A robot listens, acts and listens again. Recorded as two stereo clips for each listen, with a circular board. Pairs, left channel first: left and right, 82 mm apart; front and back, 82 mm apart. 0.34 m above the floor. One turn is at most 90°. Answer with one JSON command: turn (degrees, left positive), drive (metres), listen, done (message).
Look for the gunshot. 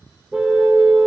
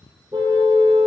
{"listen": true}
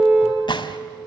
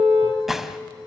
{"turn": 90}
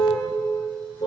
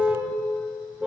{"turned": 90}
{"done": "I heard a gunshot from this way, but can't make it out now."}